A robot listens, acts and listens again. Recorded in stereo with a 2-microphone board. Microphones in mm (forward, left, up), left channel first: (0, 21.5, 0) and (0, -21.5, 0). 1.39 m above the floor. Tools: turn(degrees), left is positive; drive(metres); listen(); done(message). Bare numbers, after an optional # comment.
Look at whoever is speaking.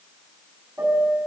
listen()
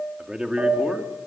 # The man speaking: about 25° right or 155° right.
turn(-25)
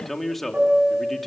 done("Found it: a man speaking, straight ahead, 2 to 4 m away.")